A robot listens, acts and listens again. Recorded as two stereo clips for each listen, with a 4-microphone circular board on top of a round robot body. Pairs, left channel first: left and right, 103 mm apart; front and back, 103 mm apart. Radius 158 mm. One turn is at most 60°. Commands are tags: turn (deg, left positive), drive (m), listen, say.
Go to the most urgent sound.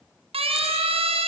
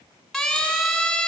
<turn deg="-60"/>
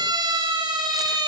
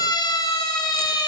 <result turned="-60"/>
<turn deg="-50"/>
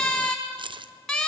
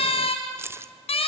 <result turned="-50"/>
<drive m="1.0"/>
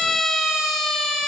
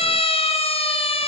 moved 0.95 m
<drive m="1.0"/>
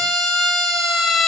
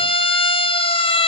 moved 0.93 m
<drive m="1.0"/>
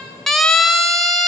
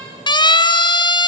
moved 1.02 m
<drive m="1.0"/>
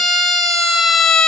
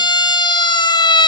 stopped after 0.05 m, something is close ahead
<say>I am next to the siren.</say>